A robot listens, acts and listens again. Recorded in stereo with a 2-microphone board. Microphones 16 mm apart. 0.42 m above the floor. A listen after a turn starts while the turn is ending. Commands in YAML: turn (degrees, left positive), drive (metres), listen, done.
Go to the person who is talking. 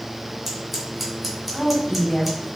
turn: 65
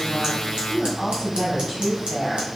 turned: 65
turn: 10
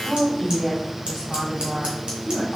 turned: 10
drive: 1.0
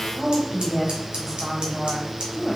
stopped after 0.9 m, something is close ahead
done: "I am next to the woman speaking."